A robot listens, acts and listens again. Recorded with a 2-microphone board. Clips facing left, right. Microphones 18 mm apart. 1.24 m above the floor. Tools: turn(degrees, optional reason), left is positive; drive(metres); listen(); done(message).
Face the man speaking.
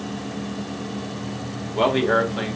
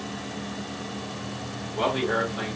turn(degrees=35, reason="The man speaking: about 35° left or 145° left.")
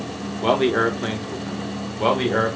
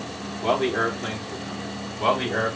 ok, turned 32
turn(degrees=30, reason="The man speaking: about 30° left or 150° left.")
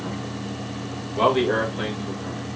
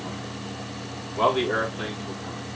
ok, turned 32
turn(degrees=45, reason="The man speaking: about 45° left or 135° left.")
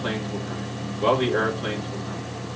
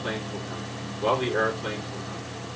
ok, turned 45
turn(degrees=100, reason="So it is at 100° left.")
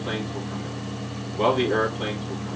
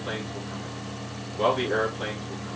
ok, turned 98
done("Found it: a man speaking, straight ahead, 2 to 4 m away.")